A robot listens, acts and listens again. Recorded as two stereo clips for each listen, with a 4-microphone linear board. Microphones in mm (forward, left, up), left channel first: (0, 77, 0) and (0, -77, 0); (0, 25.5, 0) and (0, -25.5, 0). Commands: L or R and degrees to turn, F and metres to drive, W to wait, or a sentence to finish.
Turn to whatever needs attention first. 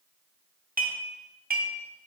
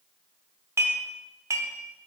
W
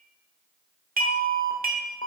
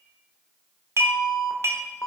L60
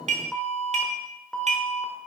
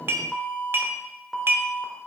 Facing the alarm, 1 to 2 m away.